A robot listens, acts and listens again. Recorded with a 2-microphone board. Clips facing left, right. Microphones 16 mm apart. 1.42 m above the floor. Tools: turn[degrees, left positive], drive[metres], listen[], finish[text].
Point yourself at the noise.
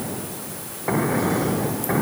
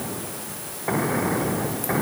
Action: listen[]
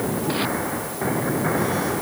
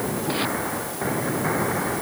Action: listen[]
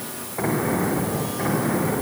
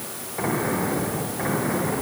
Action: finish[I can't make out anything to turn to.]